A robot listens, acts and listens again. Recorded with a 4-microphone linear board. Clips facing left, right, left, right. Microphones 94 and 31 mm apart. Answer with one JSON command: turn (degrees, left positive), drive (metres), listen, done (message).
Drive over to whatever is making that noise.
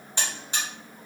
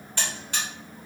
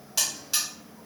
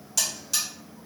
{"turn": 20}
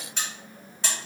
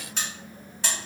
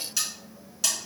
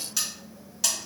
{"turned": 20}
{"drive": 1.0}
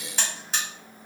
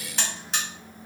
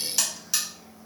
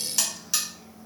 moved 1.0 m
{"drive": 1.0}
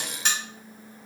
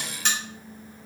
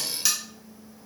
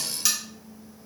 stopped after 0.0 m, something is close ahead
{"done": "Arrived at the buzzer, straight ahead."}